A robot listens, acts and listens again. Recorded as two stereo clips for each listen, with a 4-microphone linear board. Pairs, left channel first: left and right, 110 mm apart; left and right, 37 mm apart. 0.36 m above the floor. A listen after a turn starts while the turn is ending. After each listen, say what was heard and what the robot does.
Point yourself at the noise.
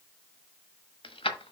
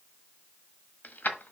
The keys jangling: about 60° left or 120° left. Turn 60° left.
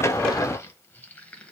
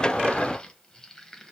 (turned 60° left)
Keep listening.
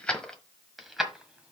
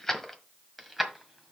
Facing the keys jangling, 1 to 2 m away.